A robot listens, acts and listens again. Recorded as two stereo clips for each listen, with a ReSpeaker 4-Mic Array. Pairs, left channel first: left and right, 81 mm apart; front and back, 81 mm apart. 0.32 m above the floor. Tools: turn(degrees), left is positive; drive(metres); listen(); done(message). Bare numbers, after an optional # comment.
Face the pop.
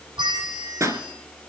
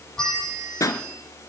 # The pop: 40° right.
turn(-40)
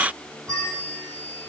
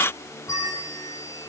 done("Facing where the pop came from. I can't hear it now.")